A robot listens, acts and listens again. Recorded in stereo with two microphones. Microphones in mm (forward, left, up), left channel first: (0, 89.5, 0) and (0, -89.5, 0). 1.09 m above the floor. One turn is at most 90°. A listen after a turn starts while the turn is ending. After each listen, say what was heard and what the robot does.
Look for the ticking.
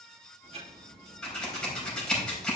The ticking: about 35° right or 145° right. Turn 35° right.
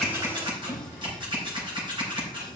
Keep listening.
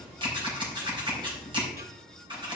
So it is at 110° right. Turn 90° right.
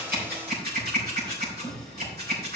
Nothing new. It was at 20° right. Turn 20° right.
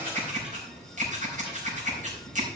Keep listening.
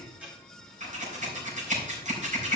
Facing the ticking.